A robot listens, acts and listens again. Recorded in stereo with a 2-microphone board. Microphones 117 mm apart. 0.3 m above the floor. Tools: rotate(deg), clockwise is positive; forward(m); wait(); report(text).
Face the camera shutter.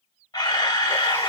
rotate(-35)
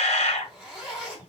rotate(-110)
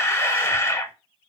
rotate(-25)
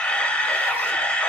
rotate(-10)
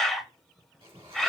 report("Found it: a camera shutter, straight ahead, under 1 m away.")